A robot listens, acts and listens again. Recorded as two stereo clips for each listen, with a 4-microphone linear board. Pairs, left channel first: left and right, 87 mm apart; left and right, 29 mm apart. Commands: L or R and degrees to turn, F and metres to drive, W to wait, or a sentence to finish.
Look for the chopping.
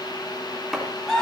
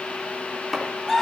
L30
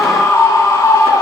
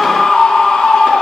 W
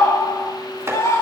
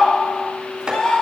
R30
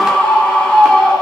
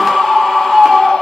W
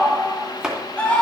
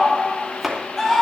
Found it: chopping, straight ahead.